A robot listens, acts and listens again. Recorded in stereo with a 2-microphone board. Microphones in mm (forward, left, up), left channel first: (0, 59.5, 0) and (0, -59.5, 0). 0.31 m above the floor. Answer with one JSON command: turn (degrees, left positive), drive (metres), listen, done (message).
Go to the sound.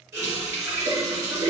{"turn": -25}
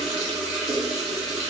{"drive": 1.0}
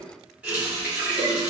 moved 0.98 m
{"turn": -15}
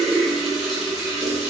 {"drive": 1.0}
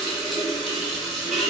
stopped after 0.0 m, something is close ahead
{"done": "Arrived at the running tap, straight ahead."}